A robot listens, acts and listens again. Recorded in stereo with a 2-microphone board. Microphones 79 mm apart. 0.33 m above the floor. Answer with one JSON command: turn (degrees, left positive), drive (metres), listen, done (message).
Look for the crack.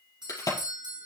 {"turn": 45}
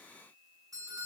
{"listen": true}
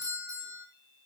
{"done": "I heard a crack, but can't make it out now. It was about straight ahead or 90° left."}